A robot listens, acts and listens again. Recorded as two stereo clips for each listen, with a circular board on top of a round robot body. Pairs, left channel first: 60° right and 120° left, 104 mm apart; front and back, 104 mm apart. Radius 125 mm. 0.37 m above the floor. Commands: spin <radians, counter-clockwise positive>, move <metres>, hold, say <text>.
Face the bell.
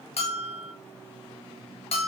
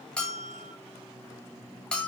spin -1.40
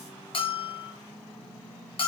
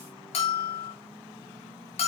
spin -0.35
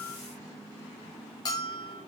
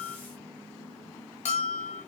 say Facing the bell, under 1 m away.